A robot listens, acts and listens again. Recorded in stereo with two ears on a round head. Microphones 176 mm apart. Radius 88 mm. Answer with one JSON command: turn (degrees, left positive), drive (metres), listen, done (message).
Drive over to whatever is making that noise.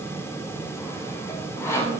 {"turn": 30}
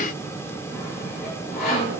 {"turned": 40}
{"turn": 125}
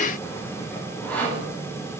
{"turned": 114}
{"turn": 10}
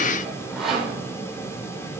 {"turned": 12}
{"drive": 1.0}
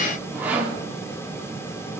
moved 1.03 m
{"turn": -10}
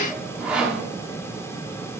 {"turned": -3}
{"drive": 1.0}
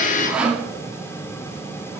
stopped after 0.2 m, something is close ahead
{"done": "I am next to the sawing."}